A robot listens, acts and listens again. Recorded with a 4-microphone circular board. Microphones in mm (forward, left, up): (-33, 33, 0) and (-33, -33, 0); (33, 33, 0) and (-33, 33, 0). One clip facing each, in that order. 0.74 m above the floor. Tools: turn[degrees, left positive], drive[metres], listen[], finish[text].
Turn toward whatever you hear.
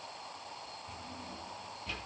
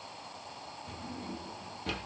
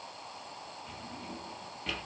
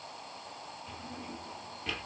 Thought: The drawer: 90° right.
Action: turn[-90]
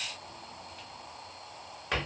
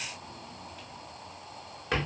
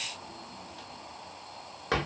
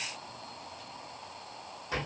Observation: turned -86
Action: finish[Found it: a drawer, straight ahead.]